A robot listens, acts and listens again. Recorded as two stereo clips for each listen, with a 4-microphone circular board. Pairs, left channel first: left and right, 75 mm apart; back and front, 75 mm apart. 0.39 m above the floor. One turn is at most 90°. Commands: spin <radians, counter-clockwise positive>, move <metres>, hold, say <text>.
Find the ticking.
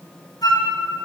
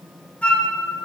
hold
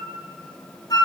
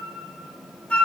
hold
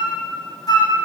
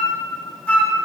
say I can't make out ticking to turn to.